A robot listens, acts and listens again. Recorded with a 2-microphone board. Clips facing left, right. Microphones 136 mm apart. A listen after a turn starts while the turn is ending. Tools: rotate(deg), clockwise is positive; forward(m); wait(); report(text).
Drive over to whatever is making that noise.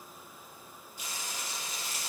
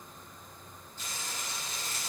rotate(-30)
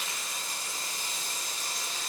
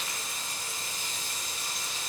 rotate(-135)
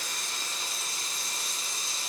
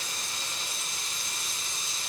rotate(-40)
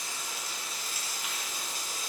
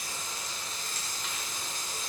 rotate(-10)
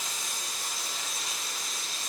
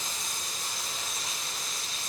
forward(1.0)
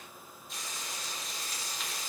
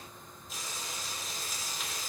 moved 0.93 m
forward(1.0)
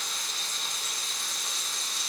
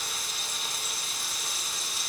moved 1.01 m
forward(1.0)
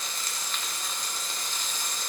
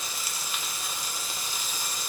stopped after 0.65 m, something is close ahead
rotate(10)
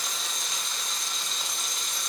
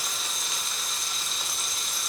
report("Arrived at the frying, straight ahead.")